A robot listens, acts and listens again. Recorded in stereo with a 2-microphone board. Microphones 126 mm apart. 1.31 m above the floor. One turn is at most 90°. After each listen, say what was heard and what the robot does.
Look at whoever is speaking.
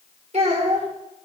The child speaking: about 60° right or 120° right. Turn 60° right.
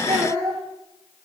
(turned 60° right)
So it is at 60° right. Turn 60° right.
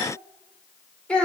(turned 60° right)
The child speaking is now 10° left. Turn 10° left.
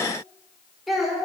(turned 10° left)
Found it: a child speaking, straight ahead.